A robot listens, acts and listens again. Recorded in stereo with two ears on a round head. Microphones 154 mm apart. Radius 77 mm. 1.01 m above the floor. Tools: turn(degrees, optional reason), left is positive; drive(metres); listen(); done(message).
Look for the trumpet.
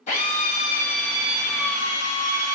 listen()
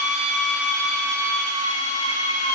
listen()
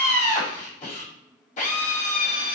done("I can't make out a trumpet to turn to.")